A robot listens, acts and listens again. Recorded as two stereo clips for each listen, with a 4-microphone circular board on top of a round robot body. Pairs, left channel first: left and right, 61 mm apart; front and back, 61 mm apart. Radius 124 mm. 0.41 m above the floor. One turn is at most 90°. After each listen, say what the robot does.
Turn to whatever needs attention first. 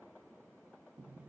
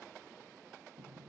Keep listening.
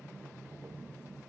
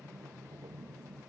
Keep listening.
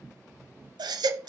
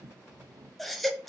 Turn 85° right.
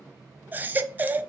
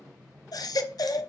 Turn 25° right.
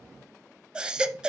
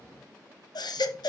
Turn 15° right.
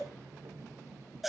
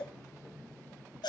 Facing the baby crying.